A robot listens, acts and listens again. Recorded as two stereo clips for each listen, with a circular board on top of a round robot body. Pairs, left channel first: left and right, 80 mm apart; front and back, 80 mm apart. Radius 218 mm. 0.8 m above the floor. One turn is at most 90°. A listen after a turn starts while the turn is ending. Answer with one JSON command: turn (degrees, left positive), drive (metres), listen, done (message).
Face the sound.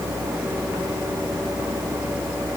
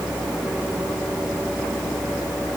{"listen": true}
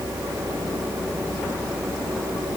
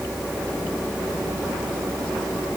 {"listen": true}
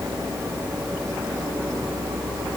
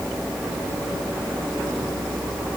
{"done": "I can't make out anything to turn to."}